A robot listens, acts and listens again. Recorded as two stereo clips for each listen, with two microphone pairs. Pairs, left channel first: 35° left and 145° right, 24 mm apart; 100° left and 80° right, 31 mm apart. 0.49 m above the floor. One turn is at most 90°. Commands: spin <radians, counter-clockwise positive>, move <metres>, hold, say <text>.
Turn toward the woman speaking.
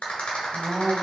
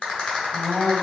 spin 1.57
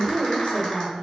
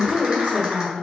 spin 1.31
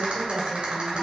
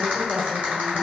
spin -0.96
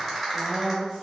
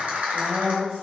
spin -0.26
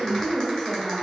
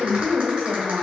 say Facing the woman speaking.